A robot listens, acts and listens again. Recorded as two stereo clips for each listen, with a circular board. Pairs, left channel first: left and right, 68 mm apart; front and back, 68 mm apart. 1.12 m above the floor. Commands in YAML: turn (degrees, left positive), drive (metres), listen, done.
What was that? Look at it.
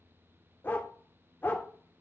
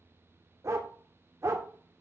turn: 145
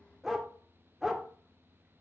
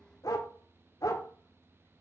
done: "Found it: a dog barking, straight ahead."